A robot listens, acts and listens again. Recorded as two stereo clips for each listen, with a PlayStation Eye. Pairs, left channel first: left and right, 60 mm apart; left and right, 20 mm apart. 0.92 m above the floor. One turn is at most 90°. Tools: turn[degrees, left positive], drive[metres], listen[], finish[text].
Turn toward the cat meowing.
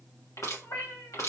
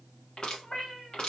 Thought: The cat meowing: about 60° left or 120° left.
Action: turn[60]
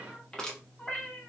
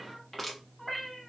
Thought: So it is at 20° left.
Action: turn[20]
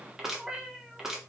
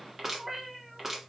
Thought: The cat meowing is now 15° right.
Action: turn[-15]
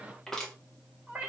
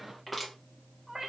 Thought: The cat meowing is now 25° right.
Action: turn[-25]
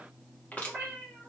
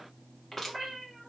Thought: The cat meowing is now 15° right.
Action: turn[-15]
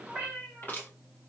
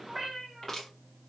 Thought: The cat meowing is now 10° right.
Action: turn[-10]
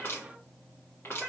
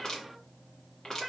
Action: finish[Found it: a cat meowing, straight ahead.]